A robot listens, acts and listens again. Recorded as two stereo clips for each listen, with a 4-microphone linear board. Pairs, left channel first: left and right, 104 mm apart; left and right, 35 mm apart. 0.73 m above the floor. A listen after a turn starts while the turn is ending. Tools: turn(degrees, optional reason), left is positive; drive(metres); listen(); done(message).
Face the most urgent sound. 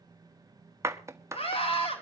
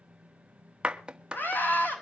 turn(degrees=60, reason="The scream: about 60° left or 120° left.")
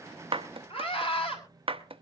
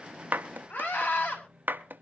turn(degrees=55, reason="So it is at 55° left.")
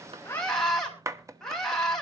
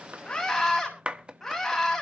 done("Facing the scream.")